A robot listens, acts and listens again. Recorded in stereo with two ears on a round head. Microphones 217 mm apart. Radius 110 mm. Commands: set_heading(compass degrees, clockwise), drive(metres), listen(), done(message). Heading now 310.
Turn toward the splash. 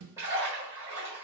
set_heading(340)
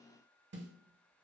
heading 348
listen()
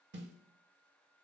done("I heard a splash, but can't make it out now. It was about 25° left or 130° right.")